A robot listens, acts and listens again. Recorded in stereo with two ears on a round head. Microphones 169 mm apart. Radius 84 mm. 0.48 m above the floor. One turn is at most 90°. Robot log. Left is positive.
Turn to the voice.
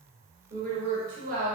note: The woman speaking: about 45° right or 135° right.
cmd yaw -45
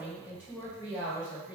note: So it is at 10° right.
cmd yaw -10
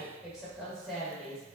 end: Found it: a woman speaking, straight ahead.